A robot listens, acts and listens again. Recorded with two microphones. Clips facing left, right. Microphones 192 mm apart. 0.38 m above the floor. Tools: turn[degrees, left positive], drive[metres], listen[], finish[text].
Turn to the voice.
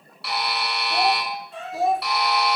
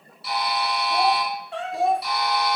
Action: turn[30]
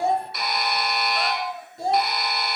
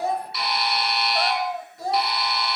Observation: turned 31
Thought: So it is at 150° left.
Action: turn[150]
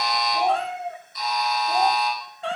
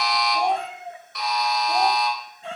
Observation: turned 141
Action: finish[Facing the child speaking, 1 to 2 m away.]